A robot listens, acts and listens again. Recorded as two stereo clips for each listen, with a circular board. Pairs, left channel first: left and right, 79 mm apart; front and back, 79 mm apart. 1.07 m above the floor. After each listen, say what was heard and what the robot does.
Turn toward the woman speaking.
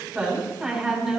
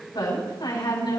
The woman speaking: 10° right. Turn 10° right.
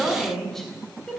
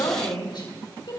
Found it: a woman speaking, straight ahead, over 4 m away.